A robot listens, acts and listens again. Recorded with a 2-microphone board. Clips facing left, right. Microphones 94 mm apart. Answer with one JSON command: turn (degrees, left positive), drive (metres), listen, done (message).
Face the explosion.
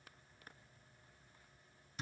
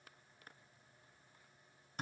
{"listen": true}
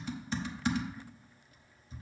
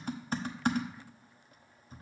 {"listen": true}
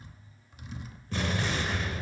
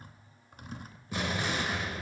{"turn": -30}
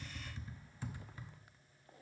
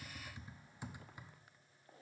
{"listen": true}
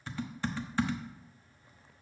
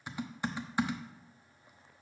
{"done": "I heard an explosion, but can't make it out now. It was about 20° left or 140° right."}